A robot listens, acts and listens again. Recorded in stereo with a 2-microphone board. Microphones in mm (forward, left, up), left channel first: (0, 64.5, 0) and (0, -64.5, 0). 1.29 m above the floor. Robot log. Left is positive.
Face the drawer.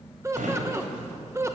cmd yaw -90
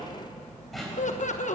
end: Found it: a drawer, straight ahead.